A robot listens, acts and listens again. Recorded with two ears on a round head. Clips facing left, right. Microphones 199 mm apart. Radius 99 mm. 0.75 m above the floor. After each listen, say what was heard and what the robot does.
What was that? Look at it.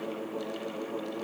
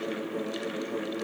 Keep listening.
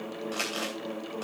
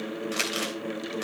The crumpling: about 25° right or 155° right. Turn 25° right.
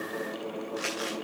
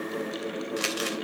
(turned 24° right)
So it is at 125° right. Turn 125° right.
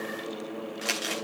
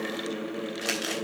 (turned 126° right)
Found it: crumpling, straight ahead, 2 to 4 m away.